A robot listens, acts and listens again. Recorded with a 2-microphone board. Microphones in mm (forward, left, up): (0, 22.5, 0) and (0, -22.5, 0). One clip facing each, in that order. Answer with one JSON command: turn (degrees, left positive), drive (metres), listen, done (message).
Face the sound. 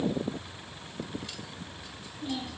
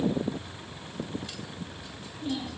{"turn": 30}
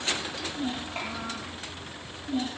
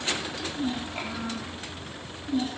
{"turn": 140}
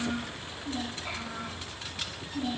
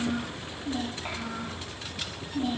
{"turn": -40}
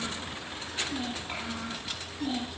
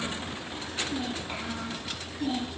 {"done": "Found it: a child speaking, straight ahead."}